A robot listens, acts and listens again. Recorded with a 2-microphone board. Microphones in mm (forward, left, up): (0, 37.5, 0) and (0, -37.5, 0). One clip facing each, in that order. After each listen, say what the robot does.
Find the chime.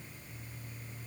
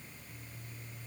Keep listening.
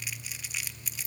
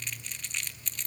Keep listening.
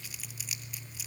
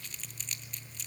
I can't make out a chime to turn to.